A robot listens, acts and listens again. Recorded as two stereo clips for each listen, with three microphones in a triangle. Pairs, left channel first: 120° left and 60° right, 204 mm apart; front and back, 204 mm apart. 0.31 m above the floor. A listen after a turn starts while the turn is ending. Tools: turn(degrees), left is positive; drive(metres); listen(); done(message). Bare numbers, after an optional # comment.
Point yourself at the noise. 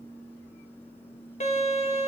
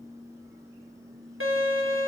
# The violin: 175° left.
turn(175)
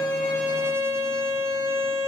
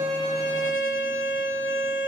# The violin is now 20° left.
turn(20)
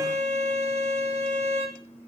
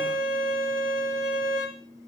done("Facing the violin, 1 to 2 m away.")